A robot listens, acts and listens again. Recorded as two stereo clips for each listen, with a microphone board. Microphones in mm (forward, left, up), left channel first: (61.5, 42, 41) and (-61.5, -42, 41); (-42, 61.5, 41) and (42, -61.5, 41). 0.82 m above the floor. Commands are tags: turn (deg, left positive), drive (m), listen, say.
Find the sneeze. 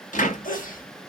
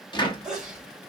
<turn deg="30"/>
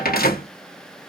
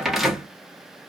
<say>Facing where the sneeze came from. I can't hear it now.</say>